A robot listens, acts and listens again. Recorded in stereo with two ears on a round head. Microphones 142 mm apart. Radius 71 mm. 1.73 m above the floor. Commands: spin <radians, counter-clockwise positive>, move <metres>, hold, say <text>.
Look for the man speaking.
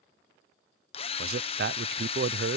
spin -1.22
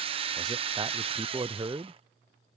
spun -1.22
spin -0.44
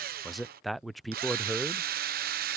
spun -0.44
say Found it: a man speaking, straight ahead.